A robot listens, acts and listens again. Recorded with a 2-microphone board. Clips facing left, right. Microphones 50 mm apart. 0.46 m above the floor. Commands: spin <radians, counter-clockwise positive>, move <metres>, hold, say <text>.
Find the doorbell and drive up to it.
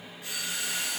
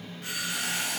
spin -0.96
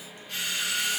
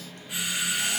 spin -0.26
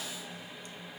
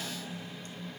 hold
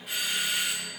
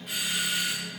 move 1.0
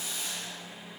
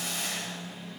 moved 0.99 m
hold
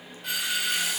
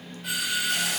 move 1.0
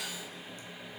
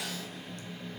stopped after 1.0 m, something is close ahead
hold
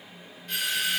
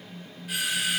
spin -0.17
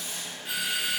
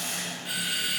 say I am next to the doorbell.